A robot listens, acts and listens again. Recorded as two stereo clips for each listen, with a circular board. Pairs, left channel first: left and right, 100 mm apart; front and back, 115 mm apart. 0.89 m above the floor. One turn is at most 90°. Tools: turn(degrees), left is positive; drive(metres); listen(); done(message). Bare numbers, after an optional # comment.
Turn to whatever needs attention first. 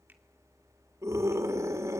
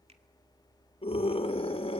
# The scream: 30° right.
turn(-30)
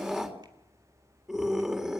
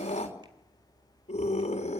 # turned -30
done("Facing the scream.")